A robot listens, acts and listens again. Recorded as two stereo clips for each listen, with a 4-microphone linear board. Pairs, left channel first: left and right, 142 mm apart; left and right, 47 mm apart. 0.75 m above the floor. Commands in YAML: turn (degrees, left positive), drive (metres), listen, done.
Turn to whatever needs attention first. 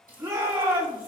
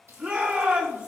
turn: -25
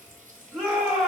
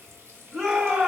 done: "Found it: a shout, straight ahead, 2 to 4 m away."